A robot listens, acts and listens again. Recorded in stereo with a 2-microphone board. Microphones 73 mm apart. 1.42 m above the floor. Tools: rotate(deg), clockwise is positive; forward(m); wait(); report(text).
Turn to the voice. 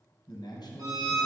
rotate(-70)
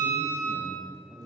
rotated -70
report("Found it: a man speaking, straight ahead, 1 to 2 m away.")